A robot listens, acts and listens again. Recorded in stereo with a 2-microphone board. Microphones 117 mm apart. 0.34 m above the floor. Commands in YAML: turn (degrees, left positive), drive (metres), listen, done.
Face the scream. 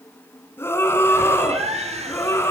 turn: 20
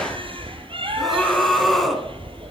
done: "Facing the scream."